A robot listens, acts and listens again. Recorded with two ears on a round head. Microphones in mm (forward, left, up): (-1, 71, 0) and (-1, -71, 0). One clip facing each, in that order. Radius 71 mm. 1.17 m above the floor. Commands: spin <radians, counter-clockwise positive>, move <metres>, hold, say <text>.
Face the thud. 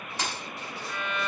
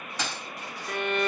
spin -1.22
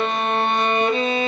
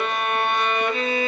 hold
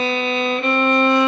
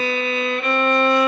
say I heard a thud, but can't make it out now. It was about straight ahead or 40° right.